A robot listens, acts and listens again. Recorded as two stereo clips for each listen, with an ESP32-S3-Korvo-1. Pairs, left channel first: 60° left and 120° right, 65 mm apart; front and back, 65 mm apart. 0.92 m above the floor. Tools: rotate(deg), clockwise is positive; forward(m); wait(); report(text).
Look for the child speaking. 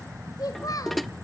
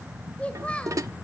rotate(-70)
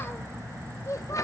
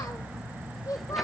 rotate(-20)
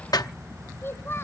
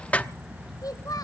rotate(-10)
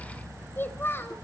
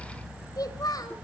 report("Facing the child speaking, 2 to 4 m away.")